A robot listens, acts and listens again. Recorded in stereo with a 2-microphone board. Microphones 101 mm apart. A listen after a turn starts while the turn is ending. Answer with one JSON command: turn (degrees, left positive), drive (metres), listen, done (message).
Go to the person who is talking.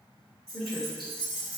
{"turn": 30}
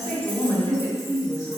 {"turn": 145}
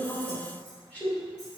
{"turn": 20}
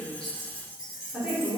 {"drive": 1.0}
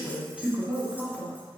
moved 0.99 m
{"drive": 1.0}
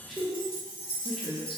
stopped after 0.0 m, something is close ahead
{"done": "Arrived at the woman speaking, straight ahead."}